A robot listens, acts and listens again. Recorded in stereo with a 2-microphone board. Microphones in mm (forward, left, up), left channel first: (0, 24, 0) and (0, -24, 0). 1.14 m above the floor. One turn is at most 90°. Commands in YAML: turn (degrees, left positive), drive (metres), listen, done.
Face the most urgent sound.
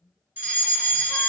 turn: -40
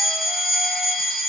turn: -10
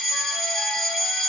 done: "Found it: a fire alarm, straight ahead, 1 to 2 m away."